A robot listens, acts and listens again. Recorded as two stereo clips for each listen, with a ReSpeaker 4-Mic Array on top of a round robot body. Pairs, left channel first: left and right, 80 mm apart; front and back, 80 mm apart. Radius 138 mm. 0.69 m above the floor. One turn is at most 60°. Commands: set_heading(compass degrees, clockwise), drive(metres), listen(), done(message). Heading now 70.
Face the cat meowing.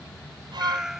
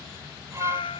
done("Facing the cat meowing.")